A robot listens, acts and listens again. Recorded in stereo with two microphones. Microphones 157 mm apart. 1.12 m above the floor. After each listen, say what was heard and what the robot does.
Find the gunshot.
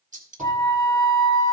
The gunshot: about 50° right or 130° right. Turn 50° right.
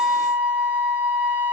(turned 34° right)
Keep listening.
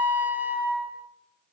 I heard a gunshot, but can't make it out now. It was about 20° right or 95° right.